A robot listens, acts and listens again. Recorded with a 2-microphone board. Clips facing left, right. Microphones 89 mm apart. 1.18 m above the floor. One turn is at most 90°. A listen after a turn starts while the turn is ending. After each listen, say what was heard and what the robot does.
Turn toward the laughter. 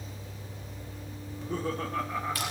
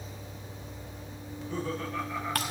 The laughter: about 40° left or 140° left. Turn 40° left.
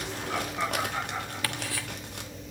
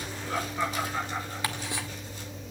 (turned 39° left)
Facing the laughter, 2 to 4 m away.